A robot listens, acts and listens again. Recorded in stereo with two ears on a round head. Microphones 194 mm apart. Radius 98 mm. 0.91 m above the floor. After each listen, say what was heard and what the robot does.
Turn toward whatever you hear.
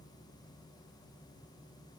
Keep listening.
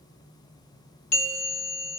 The bell: about 30° left or 150° left. Turn 30° left.
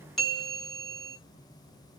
Facing the bell, under 1 m away.